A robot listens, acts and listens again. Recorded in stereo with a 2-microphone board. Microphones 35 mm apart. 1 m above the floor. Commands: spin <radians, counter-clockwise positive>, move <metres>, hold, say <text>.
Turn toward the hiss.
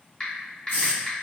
spin 1.05
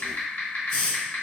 spin 0.35
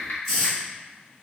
say Found it: a hiss, straight ahead.